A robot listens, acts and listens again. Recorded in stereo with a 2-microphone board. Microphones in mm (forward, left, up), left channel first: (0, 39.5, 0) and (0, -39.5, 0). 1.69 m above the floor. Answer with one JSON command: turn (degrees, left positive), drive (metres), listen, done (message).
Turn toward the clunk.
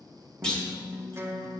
{"turn": 30}
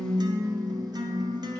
{"listen": true}
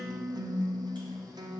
{"done": "I heard a clunk, but can't make it out now. It was about 20° right or 140° left."}